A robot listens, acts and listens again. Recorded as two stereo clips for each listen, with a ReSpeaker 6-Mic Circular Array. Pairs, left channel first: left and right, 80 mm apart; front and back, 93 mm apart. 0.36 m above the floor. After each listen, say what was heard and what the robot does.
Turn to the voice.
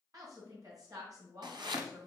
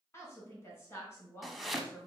The woman speaking: 55° right. Turn 55° right.
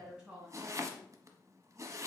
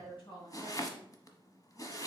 The woman speaking is now 10° right. Turn 10° right.
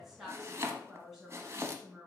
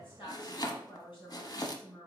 Facing the woman speaking, 2 to 4 m away.